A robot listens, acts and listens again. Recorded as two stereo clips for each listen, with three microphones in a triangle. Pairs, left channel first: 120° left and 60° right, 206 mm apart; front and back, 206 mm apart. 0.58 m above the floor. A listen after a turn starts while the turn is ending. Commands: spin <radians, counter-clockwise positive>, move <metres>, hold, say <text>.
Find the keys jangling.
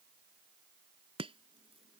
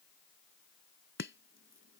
hold
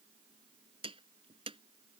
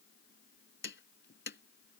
hold
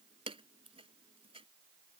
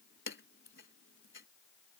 say I can't make out keys jangling, only chopping.